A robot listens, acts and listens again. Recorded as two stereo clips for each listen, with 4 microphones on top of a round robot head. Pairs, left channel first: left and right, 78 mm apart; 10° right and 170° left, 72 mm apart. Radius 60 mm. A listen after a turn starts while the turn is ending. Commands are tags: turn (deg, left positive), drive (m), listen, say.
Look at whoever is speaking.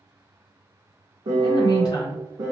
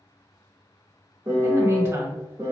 <turn deg="125"/>
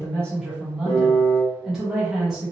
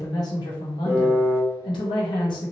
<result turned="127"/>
<say>Facing the woman speaking, 1 to 2 m away.</say>